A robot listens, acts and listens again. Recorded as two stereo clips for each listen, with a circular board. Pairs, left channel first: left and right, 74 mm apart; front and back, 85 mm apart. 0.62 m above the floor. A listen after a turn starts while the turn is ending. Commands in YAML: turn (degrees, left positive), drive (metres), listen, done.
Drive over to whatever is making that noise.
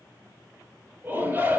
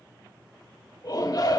turn: -30
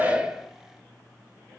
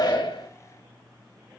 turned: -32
listen: true
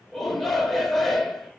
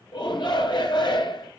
drive: 1.0
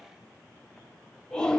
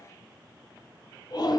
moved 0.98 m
turn: 15
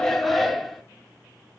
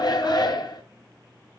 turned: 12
drive: 1.0
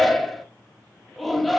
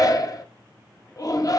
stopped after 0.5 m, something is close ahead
done: "I am next to the shout."